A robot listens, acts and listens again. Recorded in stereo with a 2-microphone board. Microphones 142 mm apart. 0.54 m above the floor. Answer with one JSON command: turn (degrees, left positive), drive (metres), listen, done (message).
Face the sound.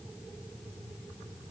{"listen": true}
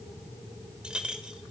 {"turn": -30}
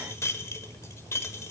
{"turn": 25}
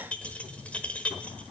{"turn": 10}
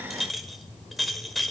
{"done": "Facing the clink, 1 to 2 m away."}